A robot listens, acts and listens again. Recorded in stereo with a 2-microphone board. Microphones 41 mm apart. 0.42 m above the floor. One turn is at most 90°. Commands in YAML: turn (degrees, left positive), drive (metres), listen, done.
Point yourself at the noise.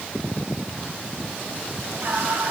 turn: -65
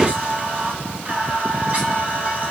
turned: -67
turn: -40
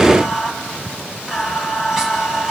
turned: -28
turn: -10
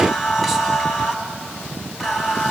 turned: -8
done: "Found it: singing, straight ahead, 2 to 4 m away."